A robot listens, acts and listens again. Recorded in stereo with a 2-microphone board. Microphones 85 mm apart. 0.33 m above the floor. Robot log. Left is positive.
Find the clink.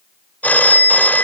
cmd idle
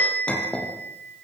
cmd yaw +30
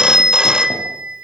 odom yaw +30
cmd idle
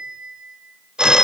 cmd idle
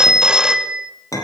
note: So it is at 135° left.
cmd yaw +135
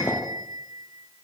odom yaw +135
cmd idle
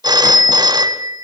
cmd idle
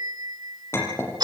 note: The clink is now 30° left.
cmd yaw +30
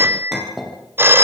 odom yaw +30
end: Facing the clink, over 4 m away.